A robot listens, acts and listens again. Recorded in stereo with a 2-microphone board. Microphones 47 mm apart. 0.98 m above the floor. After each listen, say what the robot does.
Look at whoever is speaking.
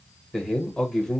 Turn 30° left.
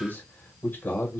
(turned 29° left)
Turn 140° left.
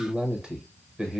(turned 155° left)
Turn 15° right.
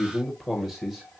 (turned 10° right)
Facing the man speaking, under 1 m away.